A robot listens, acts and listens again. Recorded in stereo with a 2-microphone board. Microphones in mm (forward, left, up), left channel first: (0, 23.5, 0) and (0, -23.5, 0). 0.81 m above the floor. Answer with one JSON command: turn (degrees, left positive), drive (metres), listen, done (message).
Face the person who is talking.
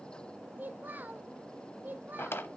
{"turn": -40}
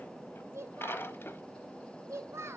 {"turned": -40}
{"turn": -100}
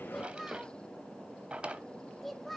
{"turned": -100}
{"done": "Facing the child speaking."}